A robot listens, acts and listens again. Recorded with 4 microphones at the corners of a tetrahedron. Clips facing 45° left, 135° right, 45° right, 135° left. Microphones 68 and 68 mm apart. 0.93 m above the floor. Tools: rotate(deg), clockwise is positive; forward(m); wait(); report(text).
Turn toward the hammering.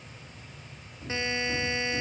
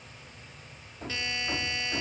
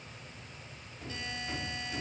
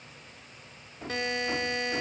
rotate(170)
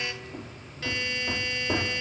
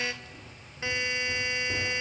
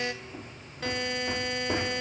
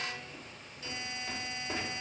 rotate(-15)
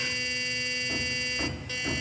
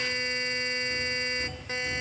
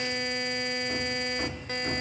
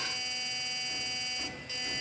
report("Found it: hammering, straight ahead, 1 to 2 m away.")